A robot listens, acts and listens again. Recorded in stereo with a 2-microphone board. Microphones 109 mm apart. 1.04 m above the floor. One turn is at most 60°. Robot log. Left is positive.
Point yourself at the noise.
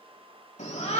cmd yaw +60
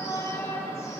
note: So it is at 30° left.
cmd yaw +30
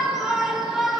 end: Facing the shout.